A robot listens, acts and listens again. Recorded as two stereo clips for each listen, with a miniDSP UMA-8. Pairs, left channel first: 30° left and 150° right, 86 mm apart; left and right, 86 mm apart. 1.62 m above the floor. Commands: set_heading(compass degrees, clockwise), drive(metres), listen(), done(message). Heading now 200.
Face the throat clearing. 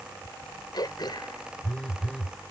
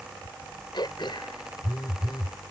set_heading(135)
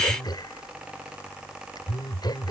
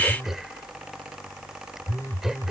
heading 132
listen()
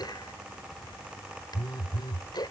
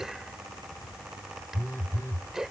done("Facing the throat clearing.")